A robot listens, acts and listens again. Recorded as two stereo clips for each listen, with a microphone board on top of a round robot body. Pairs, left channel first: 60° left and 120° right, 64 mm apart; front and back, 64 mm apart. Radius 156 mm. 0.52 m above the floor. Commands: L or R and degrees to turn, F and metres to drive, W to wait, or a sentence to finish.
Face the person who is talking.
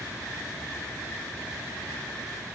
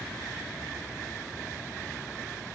W
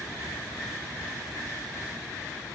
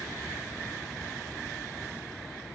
W
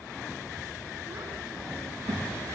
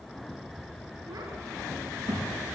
R150
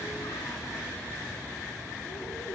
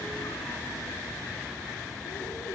W
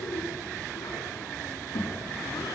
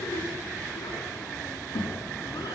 L25
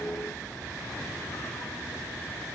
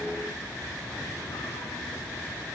W
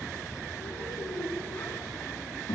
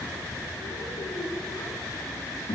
L20
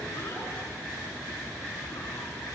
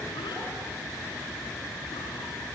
W
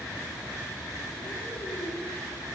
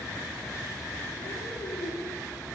L10
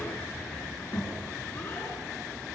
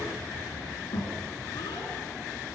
Facing the child speaking, over 4 m away.